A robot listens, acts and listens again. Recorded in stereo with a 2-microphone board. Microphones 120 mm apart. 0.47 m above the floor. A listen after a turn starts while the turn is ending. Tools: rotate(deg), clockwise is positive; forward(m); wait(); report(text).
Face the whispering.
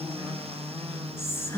rotate(-20)
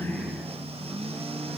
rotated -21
wait()
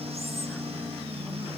wait()
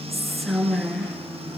report("Found it: whispering, straight ahead, over 4 m away.")